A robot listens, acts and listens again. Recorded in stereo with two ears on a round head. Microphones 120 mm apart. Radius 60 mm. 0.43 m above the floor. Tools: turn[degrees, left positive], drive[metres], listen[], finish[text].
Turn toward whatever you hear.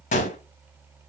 Thought: The gunshot: about 60° left or 120° left.
Action: turn[60]
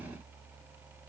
Action: listen[]
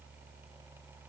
Action: finish[I heard a gunshot, but can't make it out now. It was about straight ahead or 60° left.]